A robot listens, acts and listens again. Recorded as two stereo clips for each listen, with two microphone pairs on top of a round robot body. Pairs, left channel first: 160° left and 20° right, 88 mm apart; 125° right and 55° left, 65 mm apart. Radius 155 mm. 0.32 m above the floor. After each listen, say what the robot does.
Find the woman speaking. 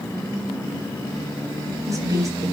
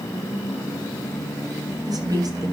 Turn 35° left.
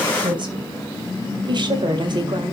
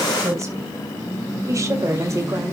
Turn 10° left.
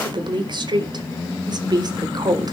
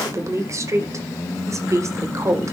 Turn 15° left.
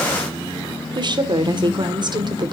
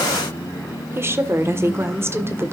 Found it: a woman speaking, straight ahead.